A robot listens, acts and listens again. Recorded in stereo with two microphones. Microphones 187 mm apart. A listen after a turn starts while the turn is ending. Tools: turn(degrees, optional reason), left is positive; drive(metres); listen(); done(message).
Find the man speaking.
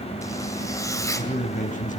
turn(degrees=45, reason="The man speaking: about 45° left or 135° left.")
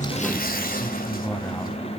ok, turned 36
listen()
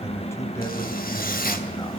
turn(degrees=15, reason="So it is at 15° left.")
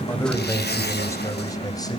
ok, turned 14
turn(degrees=20, reason="The man speaking is now 20° left.")
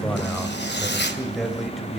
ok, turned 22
done("Facing the man speaking, 2 to 4 m away.")